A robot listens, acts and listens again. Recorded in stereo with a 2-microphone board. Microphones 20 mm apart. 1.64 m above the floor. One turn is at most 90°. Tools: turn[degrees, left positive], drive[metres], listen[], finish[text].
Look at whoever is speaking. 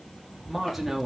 Action: turn[-30]
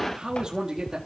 Thought: So it is at 145° right.
Action: turn[-90]
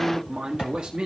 Thought: The man speaking is now 65° right.
Action: turn[-65]
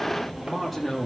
Action: finish[Found it: a man speaking, straight ahead.]